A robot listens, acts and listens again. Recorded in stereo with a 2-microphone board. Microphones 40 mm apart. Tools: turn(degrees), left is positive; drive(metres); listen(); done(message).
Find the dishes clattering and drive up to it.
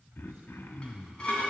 turn(degrees=25)
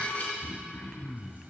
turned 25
turn(degrees=130)
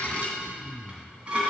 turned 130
turn(degrees=-25)
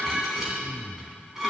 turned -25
turn(degrees=-10)
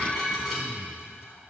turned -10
drive(metres=1.0)
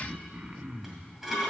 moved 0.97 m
drive(metres=1.0)
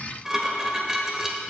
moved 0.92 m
turn(degrees=-10)
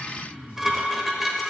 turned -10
drive(metres=1.0)
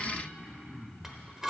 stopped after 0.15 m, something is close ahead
turn(degrees=-10)
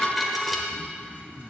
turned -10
done("I am next to the dishes clattering.")